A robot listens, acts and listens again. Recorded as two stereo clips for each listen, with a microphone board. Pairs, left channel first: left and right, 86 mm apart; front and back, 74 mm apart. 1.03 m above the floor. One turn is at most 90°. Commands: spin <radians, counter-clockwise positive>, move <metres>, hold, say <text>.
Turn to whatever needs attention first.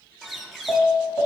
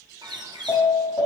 spin 0.44
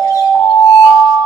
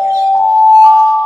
spin -0.26
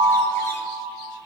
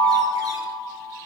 say Found it: an alarm, straight ahead, over 4 m away.